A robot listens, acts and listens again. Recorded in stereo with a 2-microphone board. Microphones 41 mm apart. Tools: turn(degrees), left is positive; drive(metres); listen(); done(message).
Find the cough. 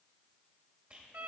listen()
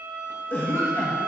turn(degrees=60)
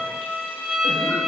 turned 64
listen()
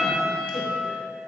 listen()
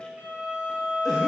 done("I heard a cough, but can't make it out now. It was about straight ahead or 55° left.")